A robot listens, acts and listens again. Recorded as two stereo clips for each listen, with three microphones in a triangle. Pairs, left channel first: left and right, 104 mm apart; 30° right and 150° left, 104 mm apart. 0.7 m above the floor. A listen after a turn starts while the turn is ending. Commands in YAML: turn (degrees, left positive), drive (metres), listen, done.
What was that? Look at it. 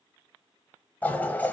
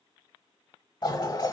turn: 15
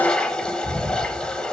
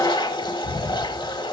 turn: 10
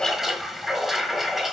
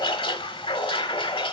done: "Facing the toilet flushing, 1 to 2 m away."